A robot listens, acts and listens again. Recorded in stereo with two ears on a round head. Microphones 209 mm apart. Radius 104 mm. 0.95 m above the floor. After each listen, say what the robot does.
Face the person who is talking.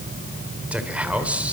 Turn 30° right.
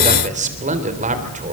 Turn 145° right.
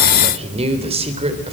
Turn 25° right.
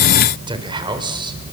Turn 20° right.
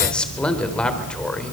Facing the man speaking.